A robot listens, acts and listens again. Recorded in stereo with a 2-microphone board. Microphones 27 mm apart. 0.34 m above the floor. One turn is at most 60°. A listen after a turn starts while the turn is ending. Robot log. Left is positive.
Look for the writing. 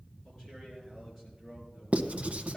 note: The writing: about 55° right or 125° right.
cmd yaw -55
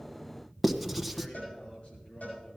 end: Found it: writing, straight ahead, under 1 m away.